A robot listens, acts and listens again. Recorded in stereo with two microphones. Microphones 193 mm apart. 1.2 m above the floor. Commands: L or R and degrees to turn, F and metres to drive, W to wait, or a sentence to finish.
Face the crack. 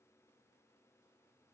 W
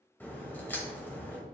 L30
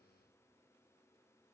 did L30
W
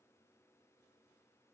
I heard a crack, but can't make it out now. It was about 20° right or 140° left.